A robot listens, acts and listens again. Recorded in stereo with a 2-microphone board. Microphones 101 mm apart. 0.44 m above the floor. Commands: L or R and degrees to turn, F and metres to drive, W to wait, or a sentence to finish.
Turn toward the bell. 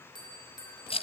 L50
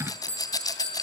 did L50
L80
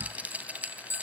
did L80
L25
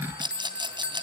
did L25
R15
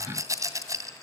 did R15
W
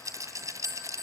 Facing the bell.